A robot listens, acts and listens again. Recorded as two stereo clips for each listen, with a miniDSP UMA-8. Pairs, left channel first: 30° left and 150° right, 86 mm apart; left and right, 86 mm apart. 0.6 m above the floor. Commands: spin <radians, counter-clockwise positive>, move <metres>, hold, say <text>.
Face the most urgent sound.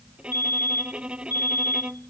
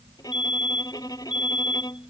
spin 1.57
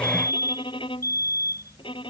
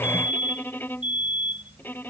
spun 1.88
spin -0.35
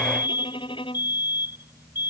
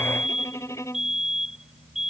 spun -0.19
say Facing the fire alarm.